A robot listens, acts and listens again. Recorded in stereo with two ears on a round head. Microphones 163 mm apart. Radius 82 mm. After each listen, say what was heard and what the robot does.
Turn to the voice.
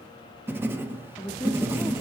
Turn 30° left.
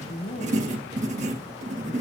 So it is at 135° left. Turn 135° left.
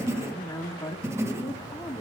The woman speaking is now 20° left. Turn 20° left.
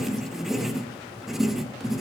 Keep listening.
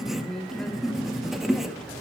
Facing the woman speaking.